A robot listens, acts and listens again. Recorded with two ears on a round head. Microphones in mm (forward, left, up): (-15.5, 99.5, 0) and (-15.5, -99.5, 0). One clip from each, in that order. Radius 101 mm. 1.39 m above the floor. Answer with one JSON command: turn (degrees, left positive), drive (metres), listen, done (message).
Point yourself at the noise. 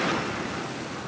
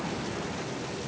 {"listen": true}
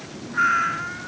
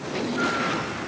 {"turn": 60}
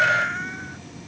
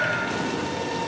{"turn": 60}
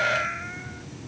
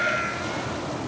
{"done": "Facing the cat meowing."}